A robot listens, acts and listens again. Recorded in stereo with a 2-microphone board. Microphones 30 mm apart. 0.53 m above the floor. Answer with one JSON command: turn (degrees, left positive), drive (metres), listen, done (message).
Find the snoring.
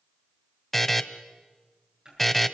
{"listen": true}
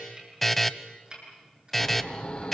{"turn": 40}
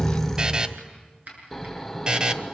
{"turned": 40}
{"turn": 10}
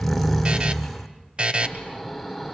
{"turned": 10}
{"done": "Facing the snoring."}